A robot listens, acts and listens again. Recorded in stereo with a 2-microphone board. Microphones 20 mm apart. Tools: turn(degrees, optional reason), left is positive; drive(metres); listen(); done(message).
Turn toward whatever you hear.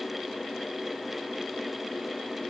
listen()
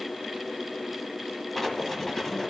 turn(degrees=15, reason="The writing: about 15° left or 165° left.")
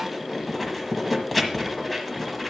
done("Facing the writing.")